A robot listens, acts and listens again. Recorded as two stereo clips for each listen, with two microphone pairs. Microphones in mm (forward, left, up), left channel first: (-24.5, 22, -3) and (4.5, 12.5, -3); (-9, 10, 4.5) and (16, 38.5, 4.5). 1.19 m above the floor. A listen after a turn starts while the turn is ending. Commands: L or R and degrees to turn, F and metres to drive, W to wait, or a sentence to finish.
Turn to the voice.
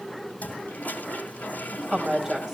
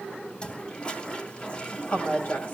R100
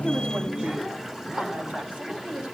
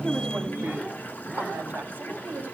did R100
L15
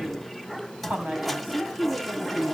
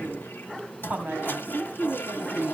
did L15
L10
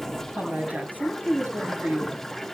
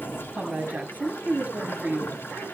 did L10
Found it: a woman speaking, straight ahead, over 4 m away.